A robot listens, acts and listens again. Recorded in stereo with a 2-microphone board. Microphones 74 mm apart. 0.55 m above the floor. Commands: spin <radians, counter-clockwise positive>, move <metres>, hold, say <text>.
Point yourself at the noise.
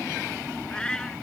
spin 0.52
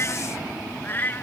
spin 2.62
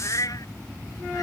spin 0.96
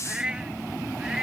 spin -0.17
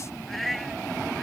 say Found it: a cat meowing, straight ahead.